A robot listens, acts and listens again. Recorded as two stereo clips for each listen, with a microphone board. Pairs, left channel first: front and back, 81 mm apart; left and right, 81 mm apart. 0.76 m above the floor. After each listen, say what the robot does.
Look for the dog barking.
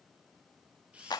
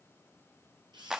Keep listening.
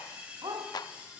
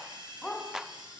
Turn 170° left.
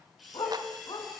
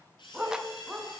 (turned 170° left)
Turn 10° right.
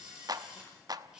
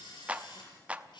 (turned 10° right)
Keep listening.
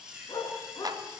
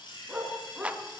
Turn 10° right.
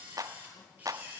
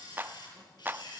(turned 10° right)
Keep listening.
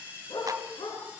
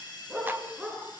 Found it: a dog barking, straight ahead.